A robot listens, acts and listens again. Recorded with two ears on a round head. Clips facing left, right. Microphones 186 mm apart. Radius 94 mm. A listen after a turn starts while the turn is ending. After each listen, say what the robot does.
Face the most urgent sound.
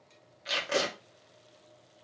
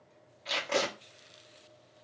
Keep listening.
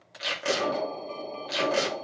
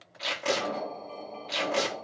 Turn 50° left.
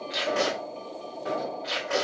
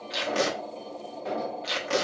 Found it: an alarm, straight ahead.